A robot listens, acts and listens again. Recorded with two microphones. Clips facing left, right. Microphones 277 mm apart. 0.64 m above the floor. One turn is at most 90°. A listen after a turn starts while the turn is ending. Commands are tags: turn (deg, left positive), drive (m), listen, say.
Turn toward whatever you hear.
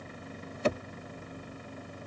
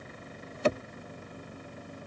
<listen/>
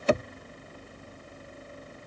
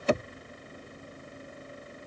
<listen/>
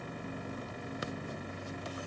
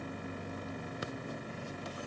<say>I can't make out anything.</say>